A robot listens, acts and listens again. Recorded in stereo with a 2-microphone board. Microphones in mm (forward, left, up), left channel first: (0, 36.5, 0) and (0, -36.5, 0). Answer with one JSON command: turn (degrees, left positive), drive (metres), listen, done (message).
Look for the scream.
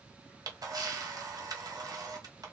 {"listen": true}
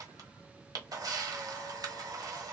{"listen": true}
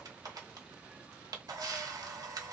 {"done": "I can't make out a scream, only a camera shutter."}